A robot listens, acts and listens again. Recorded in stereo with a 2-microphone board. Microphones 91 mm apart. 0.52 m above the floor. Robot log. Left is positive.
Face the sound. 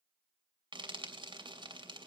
note: The frying: about 60° right or 120° right.
cmd yaw -60
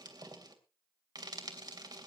note: So it is at 55° right.
cmd yaw -55
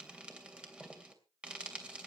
note: The frying is now 15° right.
cmd yaw -15
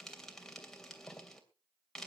end: Facing the frying.